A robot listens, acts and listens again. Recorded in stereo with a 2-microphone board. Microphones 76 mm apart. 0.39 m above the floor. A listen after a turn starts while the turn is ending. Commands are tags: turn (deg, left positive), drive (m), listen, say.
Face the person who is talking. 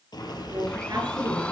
<turn deg="-60"/>
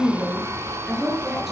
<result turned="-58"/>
<say>Facing the woman speaking.</say>